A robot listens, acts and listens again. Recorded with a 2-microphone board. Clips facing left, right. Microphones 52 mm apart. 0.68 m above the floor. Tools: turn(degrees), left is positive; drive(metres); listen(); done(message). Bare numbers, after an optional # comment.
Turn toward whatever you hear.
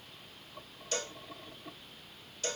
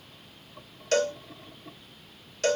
# The cowbell: about 60° right or 120° right.
turn(-60)
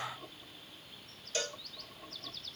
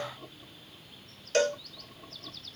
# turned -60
# So it is at 60° right.
turn(-60)
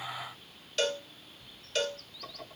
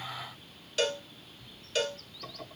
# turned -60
done("Found it: a cowbell, straight ahead, 1 to 2 m away.")